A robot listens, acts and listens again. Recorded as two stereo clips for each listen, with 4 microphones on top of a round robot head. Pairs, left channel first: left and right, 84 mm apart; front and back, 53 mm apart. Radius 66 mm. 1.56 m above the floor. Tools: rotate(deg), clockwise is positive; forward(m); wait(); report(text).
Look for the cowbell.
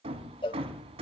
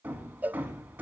rotate(-120)
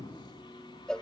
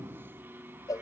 report("Facing the cowbell, 1 to 2 m away.")